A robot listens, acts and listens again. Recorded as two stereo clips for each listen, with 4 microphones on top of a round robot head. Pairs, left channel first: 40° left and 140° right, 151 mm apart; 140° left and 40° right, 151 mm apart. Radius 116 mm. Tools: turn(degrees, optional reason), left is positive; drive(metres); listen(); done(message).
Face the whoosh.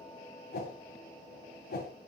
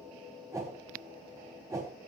turn(degrees=30, reason="The whoosh: 30° left.")
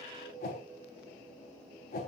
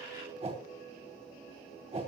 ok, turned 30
turn(degrees=10, reason="The whoosh is now 10° left.")
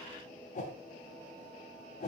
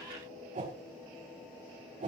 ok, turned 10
done("Found it: a whoosh, straight ahead, over 4 m away.")